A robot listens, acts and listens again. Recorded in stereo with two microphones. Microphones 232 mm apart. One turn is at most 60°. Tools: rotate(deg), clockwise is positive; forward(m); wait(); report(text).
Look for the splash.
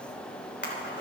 rotate(-50)
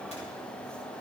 wait()
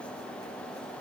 report("I heard a splash, but can't make it out now. It was about straight ahead or 80° left.")